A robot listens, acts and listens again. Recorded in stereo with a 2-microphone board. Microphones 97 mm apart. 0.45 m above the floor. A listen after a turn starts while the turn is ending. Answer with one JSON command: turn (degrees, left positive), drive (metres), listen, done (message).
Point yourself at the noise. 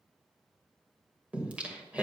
{"turn": -30}
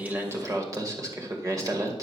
{"turn": -135}
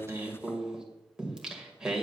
{"turn": -10}
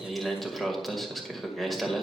{"done": "Found it: singing, straight ahead, 1 to 2 m away."}